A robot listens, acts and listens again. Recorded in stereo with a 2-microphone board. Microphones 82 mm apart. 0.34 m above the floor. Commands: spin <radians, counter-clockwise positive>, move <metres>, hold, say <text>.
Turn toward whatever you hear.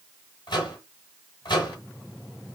spin 1.05
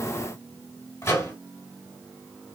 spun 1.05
spin 0.61
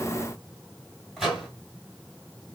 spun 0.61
say Found it: a microwave, straight ahead, 2 to 4 m away.